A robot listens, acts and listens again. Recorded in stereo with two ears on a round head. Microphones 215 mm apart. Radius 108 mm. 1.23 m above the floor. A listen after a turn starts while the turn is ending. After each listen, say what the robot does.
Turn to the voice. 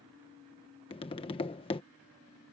Keep listening.
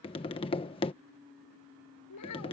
Turn 90° left.
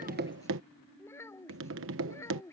Turn 10° left.
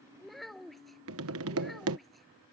Found it: a child speaking, straight ahead.